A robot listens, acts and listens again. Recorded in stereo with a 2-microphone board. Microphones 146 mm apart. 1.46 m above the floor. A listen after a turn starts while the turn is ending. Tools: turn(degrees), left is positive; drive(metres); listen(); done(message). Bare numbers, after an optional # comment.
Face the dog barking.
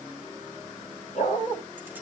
# The dog barking: about 55° left or 125° left.
turn(55)
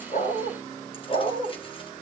# So it is at 60° left.
turn(60)
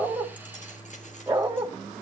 # The dog barking is now 15° right.
turn(-15)
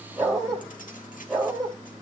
done("Facing the dog barking, 2 to 4 m away.")